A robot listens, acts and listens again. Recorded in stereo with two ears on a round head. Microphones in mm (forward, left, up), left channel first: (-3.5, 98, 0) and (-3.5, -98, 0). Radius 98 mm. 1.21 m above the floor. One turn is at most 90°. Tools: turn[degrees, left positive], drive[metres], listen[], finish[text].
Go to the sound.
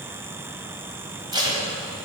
Thought: The tape being pulled: about 20° right or 160° right.
Action: turn[-20]
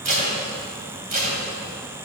Thought: So it is at 140° right.
Action: turn[-90]
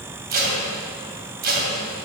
Thought: The tape being pulled is now 45° right.
Action: turn[-45]
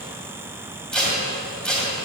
Action: drive[1.0]
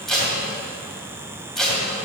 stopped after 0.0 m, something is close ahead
Action: finish[Something is in my way. I am facing the tape being pulled but have not reached it.]